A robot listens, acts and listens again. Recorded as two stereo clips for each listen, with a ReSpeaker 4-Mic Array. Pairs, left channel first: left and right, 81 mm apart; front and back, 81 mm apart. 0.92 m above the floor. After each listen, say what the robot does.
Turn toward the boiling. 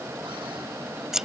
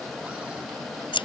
Keep listening.
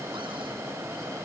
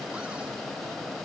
Keep listening.
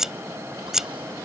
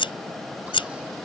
I can't make out boiling to turn to.